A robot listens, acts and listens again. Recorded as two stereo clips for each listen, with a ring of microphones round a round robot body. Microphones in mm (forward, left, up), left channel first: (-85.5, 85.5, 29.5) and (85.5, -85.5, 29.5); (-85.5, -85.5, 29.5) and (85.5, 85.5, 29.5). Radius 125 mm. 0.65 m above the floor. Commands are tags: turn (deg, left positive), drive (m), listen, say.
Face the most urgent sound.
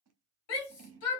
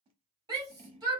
<turn deg="120"/>
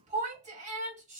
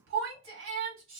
<turn deg="15"/>
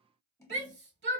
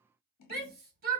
<say>Found it: a shout, straight ahead, 1 to 2 m away.</say>